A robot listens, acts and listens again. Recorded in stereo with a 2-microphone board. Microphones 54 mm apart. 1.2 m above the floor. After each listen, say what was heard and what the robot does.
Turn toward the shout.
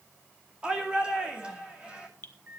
The shout: about 20° right or 160° right. Turn 20° right.
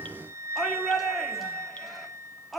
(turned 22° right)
Found it: a shout, straight ahead, 2 to 4 m away.